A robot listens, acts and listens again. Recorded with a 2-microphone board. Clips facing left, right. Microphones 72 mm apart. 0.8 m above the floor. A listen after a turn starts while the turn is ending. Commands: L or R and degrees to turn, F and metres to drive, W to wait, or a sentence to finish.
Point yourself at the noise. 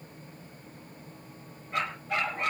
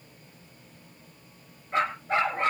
R35
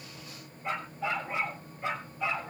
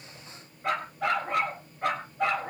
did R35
R100
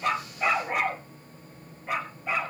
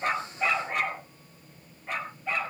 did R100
L10
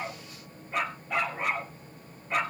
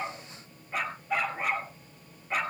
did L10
Found it: a dog barking, straight ahead.